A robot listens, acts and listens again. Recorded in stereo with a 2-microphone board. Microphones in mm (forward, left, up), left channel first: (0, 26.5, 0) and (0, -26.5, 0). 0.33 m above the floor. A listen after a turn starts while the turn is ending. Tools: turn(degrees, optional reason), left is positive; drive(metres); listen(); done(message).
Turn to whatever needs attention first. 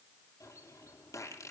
listen()
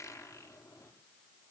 listen()
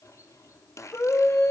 turn(degrees=50, reason="The scream: about 50° left or 130° left.")
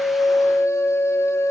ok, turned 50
turn(degrees=80, reason="So it is at 80° left.")
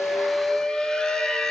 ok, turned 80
turn(degrees=20, reason="The scream is now 20° left.")
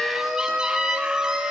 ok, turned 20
done("Found it: a scream, straight ahead.")